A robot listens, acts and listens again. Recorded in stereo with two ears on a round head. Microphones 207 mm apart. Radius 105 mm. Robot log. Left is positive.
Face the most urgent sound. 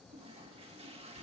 cmd idle
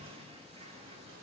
cmd idle
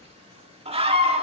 note: The scream: about 25° right or 155° right.
cmd yaw -25
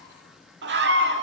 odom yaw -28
note: So it is at 125° right.
cmd yaw -125
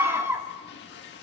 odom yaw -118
note: The scream is now 10° right.
cmd yaw -10
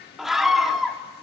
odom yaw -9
end: Facing the scream.